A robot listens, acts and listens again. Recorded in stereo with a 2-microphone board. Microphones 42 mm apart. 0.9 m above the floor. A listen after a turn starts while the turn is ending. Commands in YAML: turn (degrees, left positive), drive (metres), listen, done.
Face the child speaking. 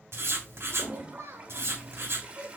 turn: -90
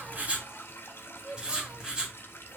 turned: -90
turn: -35
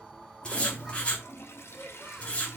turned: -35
listen: true
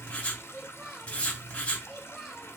done: "Found it: a child speaking, straight ahead, 1 to 2 m away."